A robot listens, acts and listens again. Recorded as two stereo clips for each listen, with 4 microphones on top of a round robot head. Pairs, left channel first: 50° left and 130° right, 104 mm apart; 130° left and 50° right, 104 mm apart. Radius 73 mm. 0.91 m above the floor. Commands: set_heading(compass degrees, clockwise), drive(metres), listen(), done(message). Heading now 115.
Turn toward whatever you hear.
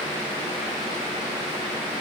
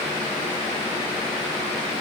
listen()
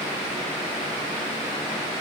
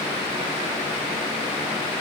listen()
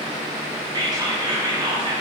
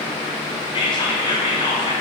set_heading(300)
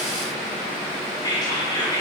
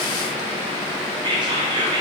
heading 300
done("Found it: whispering, straight ahead.")